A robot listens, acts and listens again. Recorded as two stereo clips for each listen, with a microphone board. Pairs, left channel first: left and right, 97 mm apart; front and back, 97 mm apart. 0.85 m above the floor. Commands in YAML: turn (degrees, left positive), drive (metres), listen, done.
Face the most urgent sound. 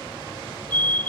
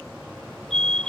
turn: 160
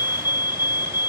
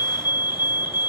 turn: 45
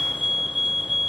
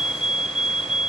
done: "Facing the fire alarm."